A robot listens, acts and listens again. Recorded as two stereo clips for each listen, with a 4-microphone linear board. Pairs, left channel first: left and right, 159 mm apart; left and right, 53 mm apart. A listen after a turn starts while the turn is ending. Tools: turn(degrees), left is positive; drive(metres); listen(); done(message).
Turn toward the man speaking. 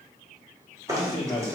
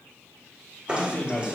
turn(degrees=35)
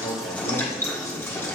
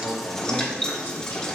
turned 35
listen()
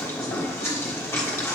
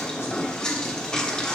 listen()
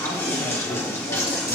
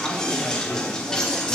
done("I heard a man speaking, but can't make it out now. It was about straight ahead or 110° left.")